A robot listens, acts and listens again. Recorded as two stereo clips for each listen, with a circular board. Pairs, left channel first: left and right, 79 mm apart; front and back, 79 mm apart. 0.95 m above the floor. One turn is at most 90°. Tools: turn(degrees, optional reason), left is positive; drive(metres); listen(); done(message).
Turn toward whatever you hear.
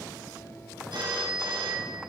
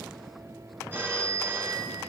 turn(degrees=-90, reason="The phone ringing: 115° right.")
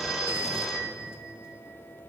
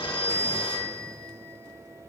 done("Found it: a phone ringing, straight ahead.")